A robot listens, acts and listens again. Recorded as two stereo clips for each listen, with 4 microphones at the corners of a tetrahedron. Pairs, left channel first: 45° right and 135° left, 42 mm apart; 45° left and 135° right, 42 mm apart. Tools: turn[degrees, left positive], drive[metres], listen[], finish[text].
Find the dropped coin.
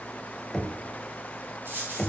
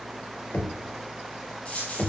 Thought: The dropped coin: 105° left.
Action: turn[105]
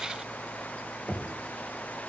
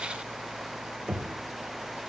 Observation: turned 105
Action: finish[Facing where the dropped coin came from. I can't hear it now.]